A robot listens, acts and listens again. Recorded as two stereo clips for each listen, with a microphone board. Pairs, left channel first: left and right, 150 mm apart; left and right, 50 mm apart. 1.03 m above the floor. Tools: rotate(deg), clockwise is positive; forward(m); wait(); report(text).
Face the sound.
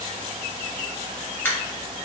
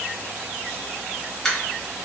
rotate(-30)
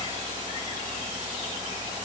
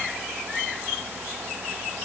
wait()
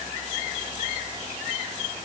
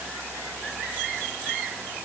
report("I heard a dropped coin, but can't make it out now. It was about 15° right or 135° left.")